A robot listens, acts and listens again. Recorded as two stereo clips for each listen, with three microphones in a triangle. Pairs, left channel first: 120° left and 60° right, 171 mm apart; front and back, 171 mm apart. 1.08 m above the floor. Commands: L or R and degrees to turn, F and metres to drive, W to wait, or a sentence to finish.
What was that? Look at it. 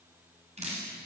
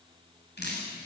R10
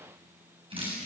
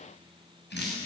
Found it: dripping, straight ahead, over 4 m away.